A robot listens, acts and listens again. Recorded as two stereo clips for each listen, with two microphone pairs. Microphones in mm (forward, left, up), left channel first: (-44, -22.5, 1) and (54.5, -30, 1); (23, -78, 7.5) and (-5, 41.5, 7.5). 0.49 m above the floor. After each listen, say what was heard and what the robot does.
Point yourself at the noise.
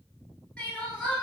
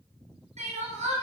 The crying: 95° left. Turn 95° left.
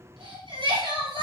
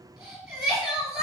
The crying is now 15° left. Turn 15° left.
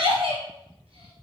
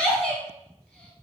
Found it: crying, straight ahead, 1 to 2 m away.